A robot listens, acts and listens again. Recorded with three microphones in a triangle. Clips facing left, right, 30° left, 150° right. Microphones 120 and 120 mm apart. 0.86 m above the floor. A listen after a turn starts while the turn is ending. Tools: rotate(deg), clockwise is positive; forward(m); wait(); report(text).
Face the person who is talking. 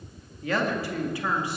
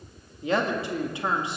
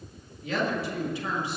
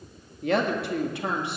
rotate(155)
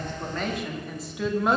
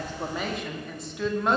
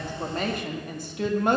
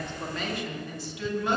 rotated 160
report("Facing the woman speaking.")